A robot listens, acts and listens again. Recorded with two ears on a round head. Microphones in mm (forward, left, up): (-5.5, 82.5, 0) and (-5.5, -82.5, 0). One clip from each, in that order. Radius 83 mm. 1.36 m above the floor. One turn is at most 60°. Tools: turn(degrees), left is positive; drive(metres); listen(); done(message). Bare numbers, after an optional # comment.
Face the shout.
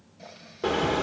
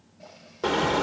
listen()
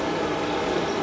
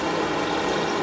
listen()
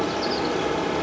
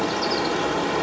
done("I can't make out a shout to turn to.")